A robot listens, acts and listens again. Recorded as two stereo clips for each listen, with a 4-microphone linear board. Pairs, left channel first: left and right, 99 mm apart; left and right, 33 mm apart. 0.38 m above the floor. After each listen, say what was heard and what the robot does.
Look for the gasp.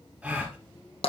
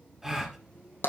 Turn 30° right.
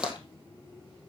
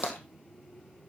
Keep listening.
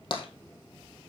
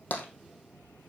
I heard a gasp, but can't make it out now. It was about 20° left or 140° right.